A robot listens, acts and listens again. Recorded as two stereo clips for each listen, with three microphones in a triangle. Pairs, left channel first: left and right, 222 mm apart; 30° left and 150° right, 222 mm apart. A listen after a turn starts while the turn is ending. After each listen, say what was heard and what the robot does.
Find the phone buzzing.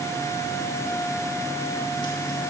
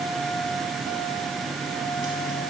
Keep listening.
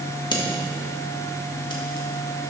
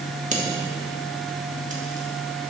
Keep listening.
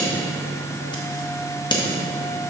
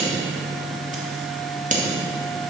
I can't make out a phone buzzing, only scissors.